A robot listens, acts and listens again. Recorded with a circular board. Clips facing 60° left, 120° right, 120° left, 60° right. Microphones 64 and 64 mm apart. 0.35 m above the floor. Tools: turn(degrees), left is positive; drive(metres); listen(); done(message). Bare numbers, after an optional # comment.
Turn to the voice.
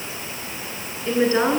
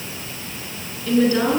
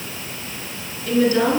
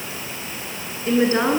done("Facing the woman speaking, over 4 m away.")